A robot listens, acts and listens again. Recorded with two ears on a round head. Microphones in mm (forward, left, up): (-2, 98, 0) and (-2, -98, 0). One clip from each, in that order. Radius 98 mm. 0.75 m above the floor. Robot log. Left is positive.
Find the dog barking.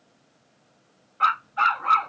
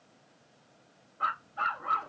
note: The dog barking: about 60° left or 120° left.
cmd yaw +60
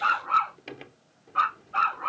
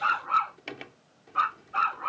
end: Found it: a dog barking, straight ahead.